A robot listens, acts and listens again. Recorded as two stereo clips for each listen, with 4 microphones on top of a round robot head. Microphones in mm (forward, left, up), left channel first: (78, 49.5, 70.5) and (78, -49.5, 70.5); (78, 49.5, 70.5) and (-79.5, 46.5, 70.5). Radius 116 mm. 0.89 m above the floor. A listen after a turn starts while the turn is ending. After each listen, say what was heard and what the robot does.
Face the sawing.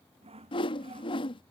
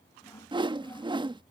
The sawing: 75° right. Turn 75° right.
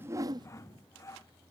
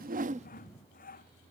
The sawing is now 30° left. Turn 30° left.
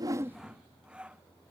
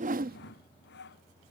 The sawing is now 10° right. Turn 10° right.
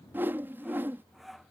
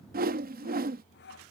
Facing the sawing.